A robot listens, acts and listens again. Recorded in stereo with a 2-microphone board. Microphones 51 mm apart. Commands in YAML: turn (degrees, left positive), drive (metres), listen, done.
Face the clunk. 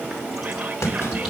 turn: 70
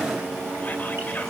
listen: true
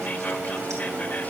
done: "I heard a clunk, but can't make it out now. It was about straight ahead or 40° left."